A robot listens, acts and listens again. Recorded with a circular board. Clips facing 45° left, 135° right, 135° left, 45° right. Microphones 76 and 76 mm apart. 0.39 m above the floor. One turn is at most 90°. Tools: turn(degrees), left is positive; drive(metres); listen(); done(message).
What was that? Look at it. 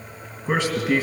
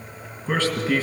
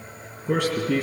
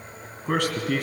turn(degrees=-35)
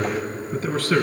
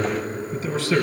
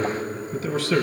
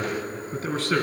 done("Facing the man speaking.")